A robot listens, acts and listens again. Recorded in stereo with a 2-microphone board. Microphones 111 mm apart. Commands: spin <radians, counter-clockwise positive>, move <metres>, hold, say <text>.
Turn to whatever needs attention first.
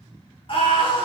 spin 0.96
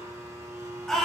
say Found it: a scream, straight ahead.